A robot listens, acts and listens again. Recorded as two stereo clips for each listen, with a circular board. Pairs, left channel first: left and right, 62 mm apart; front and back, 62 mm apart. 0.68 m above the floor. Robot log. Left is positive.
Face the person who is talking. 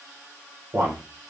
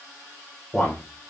note: The man speaking: 75° right.
cmd yaw -75
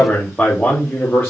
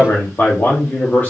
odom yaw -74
note: The man speaking is now 40° left.
cmd yaw +40
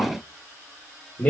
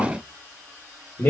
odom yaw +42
note: The man speaking is now 35° left.
cmd yaw +35
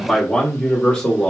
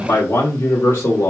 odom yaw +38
note: The man speaking is now 20° left.
cmd yaw +20
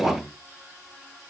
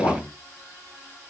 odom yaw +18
end: Found it: a man speaking, straight ahead, 1 to 2 m away.